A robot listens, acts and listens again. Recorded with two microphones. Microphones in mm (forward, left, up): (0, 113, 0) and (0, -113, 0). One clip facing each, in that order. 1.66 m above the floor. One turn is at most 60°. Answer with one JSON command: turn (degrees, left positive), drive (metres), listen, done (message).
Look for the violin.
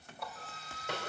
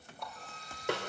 {"turn": -30}
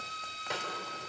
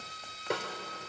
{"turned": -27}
{"done": "Found it: a violin, straight ahead."}